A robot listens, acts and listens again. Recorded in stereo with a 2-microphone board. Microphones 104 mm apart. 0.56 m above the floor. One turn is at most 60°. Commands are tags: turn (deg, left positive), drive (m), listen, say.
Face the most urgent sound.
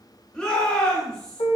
<turn deg="30"/>
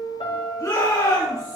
<turn deg="60"/>
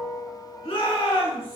<turn deg="60"/>
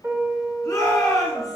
<turn deg="40"/>
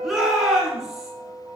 <say>Facing the shout.</say>